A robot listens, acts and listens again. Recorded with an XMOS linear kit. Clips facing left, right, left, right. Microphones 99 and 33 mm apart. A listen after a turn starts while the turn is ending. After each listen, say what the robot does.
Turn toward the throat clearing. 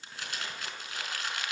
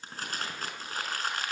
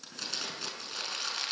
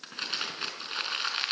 Keep listening.
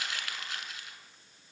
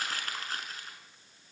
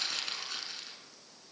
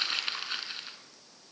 Keep listening.
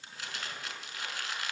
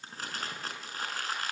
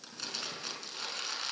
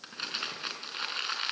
I can't make out throat clearing to turn to.